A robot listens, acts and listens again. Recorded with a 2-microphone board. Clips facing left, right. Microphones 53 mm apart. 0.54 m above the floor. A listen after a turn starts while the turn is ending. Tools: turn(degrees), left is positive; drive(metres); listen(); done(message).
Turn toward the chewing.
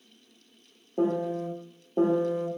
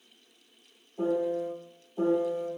listen()
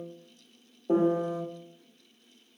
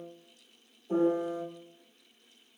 listen()
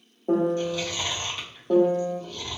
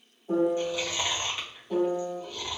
turn(degrees=-30)
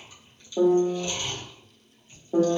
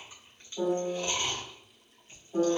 turn(degrees=-130)
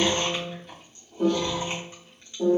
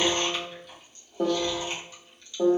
turn(degrees=35)
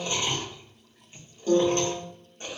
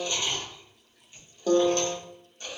turn(degrees=40)
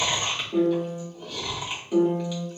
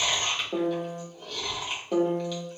done("Found it: chewing, straight ahead, 1 to 2 m away.")